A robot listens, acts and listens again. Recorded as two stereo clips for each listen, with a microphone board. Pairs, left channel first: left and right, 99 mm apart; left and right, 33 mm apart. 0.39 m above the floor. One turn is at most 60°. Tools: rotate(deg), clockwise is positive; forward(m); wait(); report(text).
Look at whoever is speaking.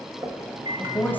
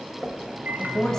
rotate(-20)
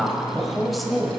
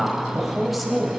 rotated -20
report("Found it: a woman speaking, straight ahead, 1 to 2 m away.")